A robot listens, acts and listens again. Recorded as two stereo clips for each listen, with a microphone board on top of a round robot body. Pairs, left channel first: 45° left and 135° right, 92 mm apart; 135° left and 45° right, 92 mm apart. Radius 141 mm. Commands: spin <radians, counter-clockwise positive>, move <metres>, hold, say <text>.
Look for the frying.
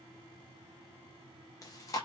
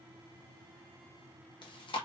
hold
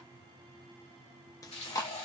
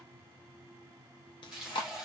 spin 0.70
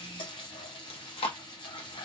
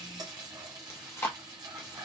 say Found it: frying, straight ahead, under 1 m away.